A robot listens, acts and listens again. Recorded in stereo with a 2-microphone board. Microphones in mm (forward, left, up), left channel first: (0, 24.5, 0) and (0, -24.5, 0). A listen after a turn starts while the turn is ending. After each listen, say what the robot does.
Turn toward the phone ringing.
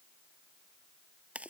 Keep listening.
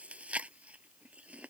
Keep listening.
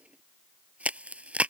I can't make out a phone ringing, only chewing.